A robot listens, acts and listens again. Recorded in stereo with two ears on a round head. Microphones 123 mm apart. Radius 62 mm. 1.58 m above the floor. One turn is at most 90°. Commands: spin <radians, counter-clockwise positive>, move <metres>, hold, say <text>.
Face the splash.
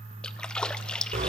spin 0.52
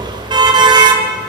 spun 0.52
hold
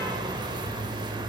say I heard a splash, but can't make it out now. It was about 25° right or 145° left.